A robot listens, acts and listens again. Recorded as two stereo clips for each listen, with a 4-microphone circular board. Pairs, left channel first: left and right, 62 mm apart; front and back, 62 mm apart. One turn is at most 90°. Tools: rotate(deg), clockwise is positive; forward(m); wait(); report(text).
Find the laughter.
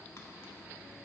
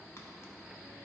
wait()
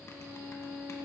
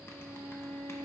wait()
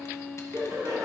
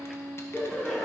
rotate(85)
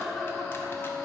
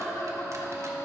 report("Found it: laughter, straight ahead, 2 to 4 m away.")